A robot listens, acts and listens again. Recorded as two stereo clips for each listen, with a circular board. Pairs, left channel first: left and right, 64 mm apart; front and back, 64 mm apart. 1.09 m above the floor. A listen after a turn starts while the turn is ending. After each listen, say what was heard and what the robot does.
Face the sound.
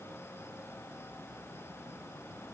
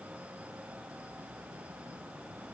Keep listening.
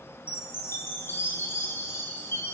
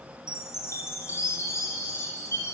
The chime: 40° left. Turn 40° left.
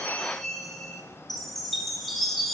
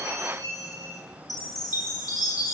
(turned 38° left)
Found it: a chime, straight ahead, 2 to 4 m away.